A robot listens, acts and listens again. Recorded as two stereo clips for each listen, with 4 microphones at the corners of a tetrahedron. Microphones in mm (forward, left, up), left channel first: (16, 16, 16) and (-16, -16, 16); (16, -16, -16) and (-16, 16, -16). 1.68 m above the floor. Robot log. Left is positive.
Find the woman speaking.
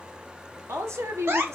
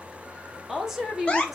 note: The woman speaking: 140° right.
cmd yaw -140
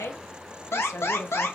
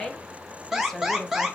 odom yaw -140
note: The woman speaking is now 40° left.
cmd yaw +40
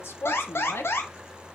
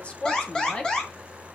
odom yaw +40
note: The woman speaking is now 25° left.
cmd yaw +25
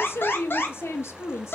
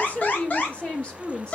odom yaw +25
note: The woman speaking is now 25° left.
cmd yaw +25
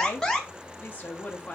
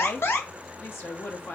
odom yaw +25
note: The woman speaking is now 10° right.
cmd yaw -10
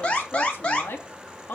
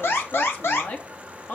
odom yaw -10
end: Found it: a woman speaking, straight ahead, 1 to 2 m away.